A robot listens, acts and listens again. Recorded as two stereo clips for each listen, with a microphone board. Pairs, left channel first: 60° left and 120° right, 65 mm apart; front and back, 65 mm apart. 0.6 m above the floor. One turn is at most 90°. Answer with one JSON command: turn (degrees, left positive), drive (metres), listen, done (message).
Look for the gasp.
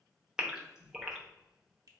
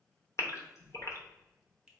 {"turn": -40}
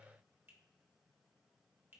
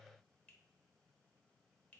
{"done": "I heard a gasp from this way, but can't make it out now."}